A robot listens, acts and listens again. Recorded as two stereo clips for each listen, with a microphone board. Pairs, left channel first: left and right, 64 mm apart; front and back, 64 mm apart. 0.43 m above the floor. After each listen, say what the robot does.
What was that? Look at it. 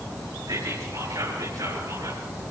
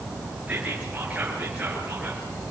Turn 110° right.
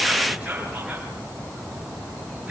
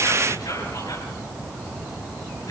Turn 15° right.
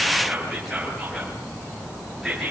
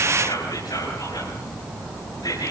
Found it: whispering, straight ahead.